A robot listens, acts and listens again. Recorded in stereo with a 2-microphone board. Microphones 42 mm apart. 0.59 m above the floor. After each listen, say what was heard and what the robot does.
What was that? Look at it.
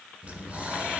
The breathing: about 30° right or 150° right. Turn 30° right.
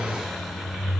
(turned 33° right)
Facing the breathing, 2 to 4 m away.